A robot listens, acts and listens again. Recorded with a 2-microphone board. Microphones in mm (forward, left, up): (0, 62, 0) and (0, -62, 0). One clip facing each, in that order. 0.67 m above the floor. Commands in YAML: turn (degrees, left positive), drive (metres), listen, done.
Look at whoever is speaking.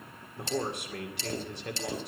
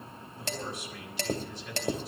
turn: 60
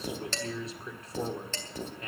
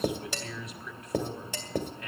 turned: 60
turn: 40
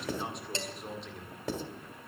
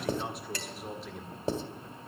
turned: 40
done: "Found it: a man speaking, straight ahead."